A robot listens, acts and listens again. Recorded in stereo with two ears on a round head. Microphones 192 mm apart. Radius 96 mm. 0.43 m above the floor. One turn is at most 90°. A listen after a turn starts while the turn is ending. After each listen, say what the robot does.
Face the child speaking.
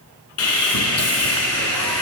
Keep listening.
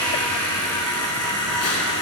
Keep listening.
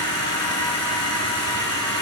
I can't make out a child speaking to turn to.